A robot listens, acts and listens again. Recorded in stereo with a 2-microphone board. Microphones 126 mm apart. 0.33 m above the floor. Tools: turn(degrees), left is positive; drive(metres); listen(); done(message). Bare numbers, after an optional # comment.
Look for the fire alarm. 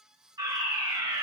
# The fire alarm: about 30° right or 150° right.
turn(-30)
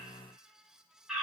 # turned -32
done("Found it: a fire alarm, straight ahead, over 4 m away.")